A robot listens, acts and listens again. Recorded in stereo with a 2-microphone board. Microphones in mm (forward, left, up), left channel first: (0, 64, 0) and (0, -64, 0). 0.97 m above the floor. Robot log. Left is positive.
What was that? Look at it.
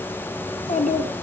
cmd yaw +90
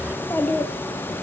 note: So it is at 20° left.
cmd yaw +20
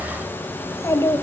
note: The child speaking is now 25° left.
cmd yaw +25
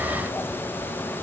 cmd idle
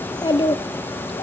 note: The child speaking is now 35° left.
cmd yaw +35
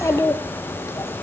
note: The child speaking is now 25° left.
cmd yaw +25
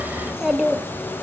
end: Found it: a child speaking, straight ahead.